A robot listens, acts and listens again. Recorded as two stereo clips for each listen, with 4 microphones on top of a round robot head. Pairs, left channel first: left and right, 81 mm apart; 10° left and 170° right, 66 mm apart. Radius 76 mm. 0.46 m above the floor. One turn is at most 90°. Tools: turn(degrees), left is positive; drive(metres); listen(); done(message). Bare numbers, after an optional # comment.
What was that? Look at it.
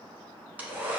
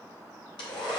# The hair dryer: 20° right.
turn(-20)
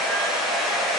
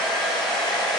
done("Facing the hair dryer.")